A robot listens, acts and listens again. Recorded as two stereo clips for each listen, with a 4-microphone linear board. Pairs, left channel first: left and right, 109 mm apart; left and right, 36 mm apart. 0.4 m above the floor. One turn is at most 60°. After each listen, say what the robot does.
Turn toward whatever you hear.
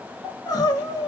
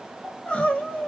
Turn 35° left.
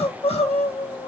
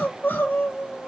Turn 60° left.
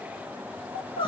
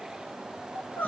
Turn 50° left.
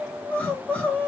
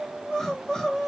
Turn 15° left.
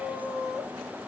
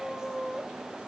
Found it: crying, straight ahead, under 1 m away.